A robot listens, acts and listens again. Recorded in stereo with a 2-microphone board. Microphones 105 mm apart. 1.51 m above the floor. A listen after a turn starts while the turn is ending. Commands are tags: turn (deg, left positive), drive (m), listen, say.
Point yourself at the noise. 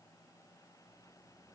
<listen/>
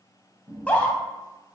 <turn deg="30"/>
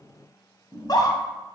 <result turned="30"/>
<turn deg="135"/>
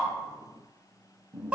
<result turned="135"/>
<turn deg="-15"/>
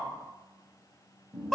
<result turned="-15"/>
<say>Found it: a scream, straight ahead.</say>